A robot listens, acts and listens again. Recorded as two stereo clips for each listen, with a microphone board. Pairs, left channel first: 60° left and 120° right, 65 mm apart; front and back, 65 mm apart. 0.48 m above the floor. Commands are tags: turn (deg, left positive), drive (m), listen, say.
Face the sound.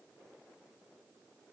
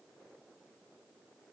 <listen/>
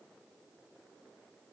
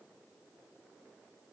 <listen/>
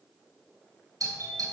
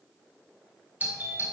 <turn deg="-120"/>
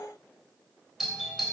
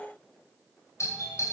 <turn deg="-30"/>
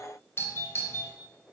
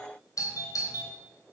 <turn deg="15"/>
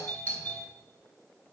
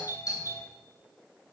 <say>Facing the doorbell, 2 to 4 m away.</say>